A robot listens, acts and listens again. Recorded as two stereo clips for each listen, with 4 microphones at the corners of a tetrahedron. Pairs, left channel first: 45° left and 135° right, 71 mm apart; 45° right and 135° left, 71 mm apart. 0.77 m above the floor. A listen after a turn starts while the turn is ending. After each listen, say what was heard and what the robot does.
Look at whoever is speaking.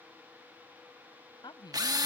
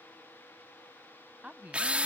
The woman speaking: 60° left. Turn 60° left.
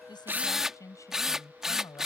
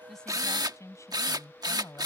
Found it: a woman speaking, straight ahead.